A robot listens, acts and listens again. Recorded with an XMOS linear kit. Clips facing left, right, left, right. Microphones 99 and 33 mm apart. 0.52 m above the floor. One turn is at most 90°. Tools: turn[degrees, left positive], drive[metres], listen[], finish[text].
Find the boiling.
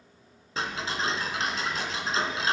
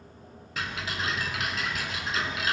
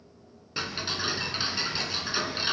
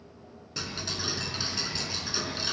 Action: listen[]
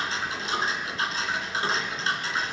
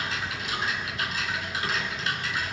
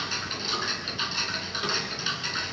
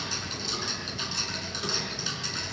Action: listen[]
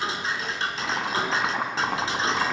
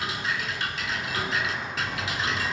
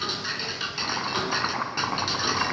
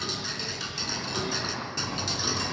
Action: turn[90]
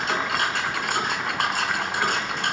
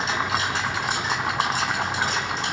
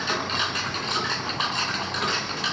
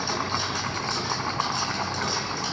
Action: listen[]
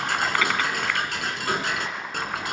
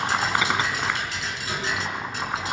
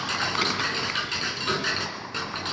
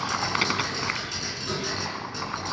Thought: The boiling is now 20° right.
Action: turn[-20]
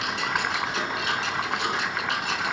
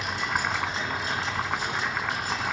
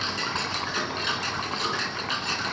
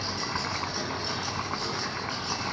Action: listen[]
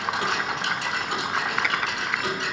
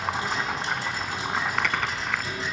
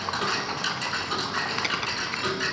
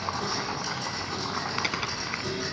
Action: finish[Facing the boiling, 1 to 2 m away.]